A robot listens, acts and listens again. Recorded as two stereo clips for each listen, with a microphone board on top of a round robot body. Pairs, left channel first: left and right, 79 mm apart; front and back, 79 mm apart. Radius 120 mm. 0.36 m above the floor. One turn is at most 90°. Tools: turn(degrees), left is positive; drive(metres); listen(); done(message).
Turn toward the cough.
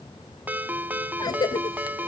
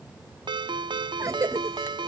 turn(degrees=90)
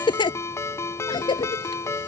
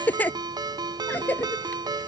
turn(degrees=70)
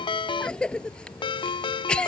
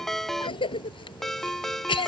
turn(degrees=10)
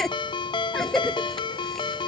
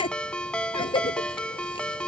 done("Found it: a cough, straight ahead.")